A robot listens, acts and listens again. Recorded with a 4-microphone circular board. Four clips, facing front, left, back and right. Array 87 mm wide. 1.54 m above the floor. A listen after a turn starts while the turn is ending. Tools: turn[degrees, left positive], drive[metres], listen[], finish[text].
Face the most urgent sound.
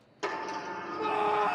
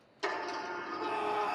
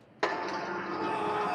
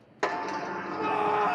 Thought: The scream: 70° right.
Action: turn[-70]
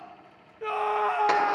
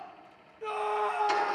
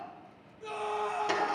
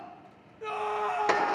Action: finish[Found it: a scream, straight ahead, under 1 m away.]